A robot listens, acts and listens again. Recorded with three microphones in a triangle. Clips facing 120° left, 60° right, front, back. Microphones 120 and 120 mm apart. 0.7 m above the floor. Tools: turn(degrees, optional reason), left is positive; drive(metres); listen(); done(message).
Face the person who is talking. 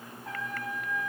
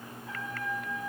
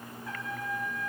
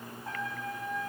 listen()
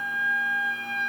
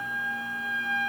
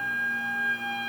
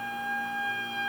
listen()
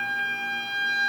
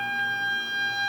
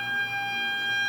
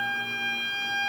done("I can't make out anyone speaking, only a trumpet.")